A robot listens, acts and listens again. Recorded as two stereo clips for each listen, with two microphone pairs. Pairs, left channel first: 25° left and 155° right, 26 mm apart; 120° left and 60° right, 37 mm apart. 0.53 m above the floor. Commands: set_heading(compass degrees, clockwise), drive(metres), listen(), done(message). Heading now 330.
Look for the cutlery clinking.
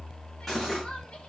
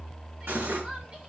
set_heading(25)
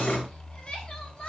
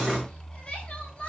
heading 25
listen()
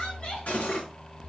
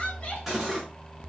set_heading(5)
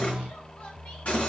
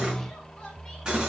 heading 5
done("Facing the cutlery clinking, over 4 m away.")